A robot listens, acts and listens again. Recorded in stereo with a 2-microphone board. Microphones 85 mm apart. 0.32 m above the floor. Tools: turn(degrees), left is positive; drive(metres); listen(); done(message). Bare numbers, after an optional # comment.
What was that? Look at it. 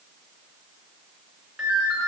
turn(-30)
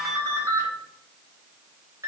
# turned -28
# So it is at 145° right.
turn(-145)
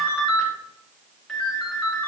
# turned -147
done("Facing the ringtone.")